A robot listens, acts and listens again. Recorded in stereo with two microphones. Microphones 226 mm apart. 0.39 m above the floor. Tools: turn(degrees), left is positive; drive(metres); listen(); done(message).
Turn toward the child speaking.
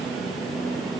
listen()
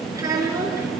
turn(degrees=-30)
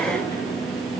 listen()
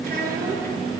turn(degrees=-140)
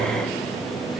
listen()
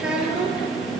done("Found it: a child speaking, straight ahead, over 4 m away.")